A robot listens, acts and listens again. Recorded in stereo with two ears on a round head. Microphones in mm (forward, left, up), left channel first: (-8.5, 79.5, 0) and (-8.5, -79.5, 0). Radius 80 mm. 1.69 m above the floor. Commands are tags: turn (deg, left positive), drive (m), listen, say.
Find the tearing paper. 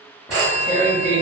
<turn deg="20"/>
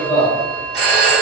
<turn deg="140"/>
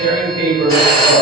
<turn deg="-35"/>
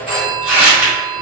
<say>Found it: tearing paper, straight ahead.</say>